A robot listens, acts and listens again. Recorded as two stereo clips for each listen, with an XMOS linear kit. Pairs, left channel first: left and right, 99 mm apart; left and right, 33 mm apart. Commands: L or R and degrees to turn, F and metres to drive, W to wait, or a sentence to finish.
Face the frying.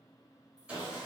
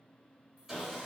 W
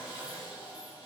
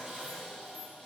W
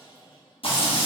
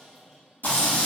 L65
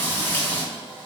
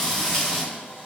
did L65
L20
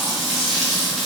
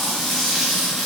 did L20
Facing the frying.